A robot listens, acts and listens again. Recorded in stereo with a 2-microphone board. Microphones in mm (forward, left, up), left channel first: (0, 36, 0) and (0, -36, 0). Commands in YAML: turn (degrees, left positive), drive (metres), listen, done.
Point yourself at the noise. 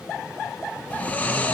turn: 30
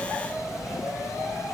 listen: true
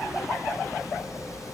listen: true
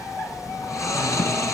turn: 135
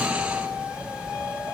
turn: -10
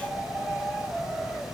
listen: true
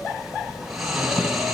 done: "Found it: snoring, straight ahead."